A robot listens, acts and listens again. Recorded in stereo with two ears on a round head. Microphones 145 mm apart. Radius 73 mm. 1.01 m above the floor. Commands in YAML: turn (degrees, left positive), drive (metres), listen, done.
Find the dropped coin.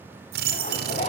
turn: -60
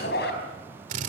listen: true
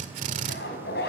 done: "I heard a dropped coin, but can't make it out now. It was about straight ahead or 60° right."